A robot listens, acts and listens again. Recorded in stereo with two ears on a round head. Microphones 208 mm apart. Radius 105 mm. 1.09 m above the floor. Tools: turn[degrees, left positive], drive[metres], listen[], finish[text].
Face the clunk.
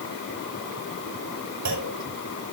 Action: turn[-90]
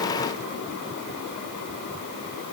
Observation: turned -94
Action: finish[Facing where the clunk came from. I can't hear it now.]